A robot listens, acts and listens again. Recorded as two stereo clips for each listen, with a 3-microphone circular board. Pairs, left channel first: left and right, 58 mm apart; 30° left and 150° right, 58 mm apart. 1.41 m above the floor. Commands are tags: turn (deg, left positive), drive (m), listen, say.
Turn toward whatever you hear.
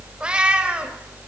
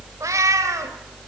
<turn deg="-160"/>
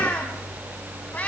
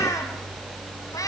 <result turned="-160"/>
<listen/>
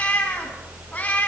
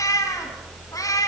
<turn deg="25"/>
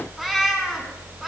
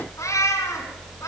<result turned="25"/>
<say>Found it: a cat meowing, straight ahead, over 4 m away.</say>